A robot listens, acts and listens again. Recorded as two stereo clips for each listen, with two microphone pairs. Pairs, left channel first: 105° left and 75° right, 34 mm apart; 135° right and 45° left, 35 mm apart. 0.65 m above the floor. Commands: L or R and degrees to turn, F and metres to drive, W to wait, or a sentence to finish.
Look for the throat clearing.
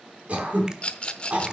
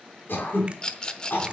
R120
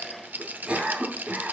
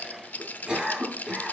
R20
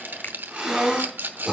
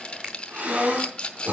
Found it: throat clearing, straight ahead.